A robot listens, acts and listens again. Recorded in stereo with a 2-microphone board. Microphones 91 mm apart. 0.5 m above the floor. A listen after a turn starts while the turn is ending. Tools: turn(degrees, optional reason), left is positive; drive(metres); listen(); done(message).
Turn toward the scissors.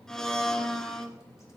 listen()
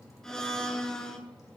listen()
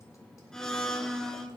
done("I can't make out scissors to turn to.")